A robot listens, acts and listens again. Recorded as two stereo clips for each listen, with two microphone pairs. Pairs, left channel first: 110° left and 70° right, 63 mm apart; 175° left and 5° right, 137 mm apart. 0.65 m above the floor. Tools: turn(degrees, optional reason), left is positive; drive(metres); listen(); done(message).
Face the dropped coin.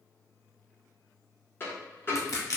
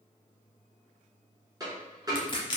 turn(degrees=55, reason="The dropped coin: 55° left.")
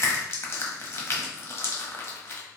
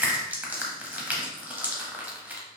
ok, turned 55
done("I heard a dropped coin from this way, but can't make it out now.")